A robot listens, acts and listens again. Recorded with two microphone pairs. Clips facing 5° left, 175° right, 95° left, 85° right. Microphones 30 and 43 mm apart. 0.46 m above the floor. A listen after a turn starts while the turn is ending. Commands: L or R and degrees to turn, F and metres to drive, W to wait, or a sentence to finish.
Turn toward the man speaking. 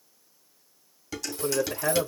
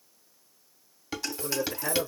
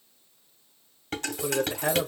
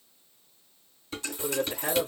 L30
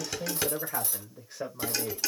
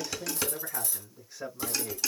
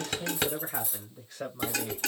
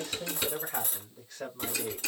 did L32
L20
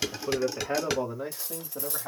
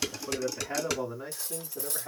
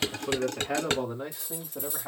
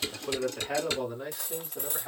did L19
L25
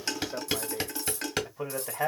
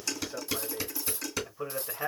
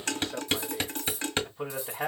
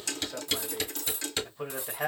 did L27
Found it: a man speaking, straight ahead.